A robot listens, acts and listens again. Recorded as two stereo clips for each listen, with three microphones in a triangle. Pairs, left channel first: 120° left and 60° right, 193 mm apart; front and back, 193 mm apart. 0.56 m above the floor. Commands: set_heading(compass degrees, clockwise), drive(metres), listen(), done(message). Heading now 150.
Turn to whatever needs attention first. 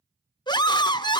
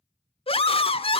set_heading(95)
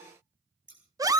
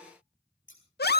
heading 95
set_heading(85)
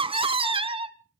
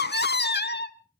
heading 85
done("Found it: a scream, straight ahead.")